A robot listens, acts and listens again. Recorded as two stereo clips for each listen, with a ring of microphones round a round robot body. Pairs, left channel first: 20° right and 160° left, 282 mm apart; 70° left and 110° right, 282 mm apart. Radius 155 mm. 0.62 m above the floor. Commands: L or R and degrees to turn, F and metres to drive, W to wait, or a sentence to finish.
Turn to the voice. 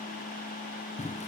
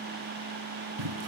W
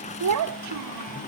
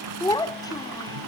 L145
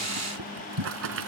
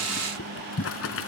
W
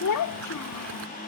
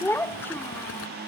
R15
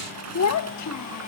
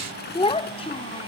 Facing the child speaking.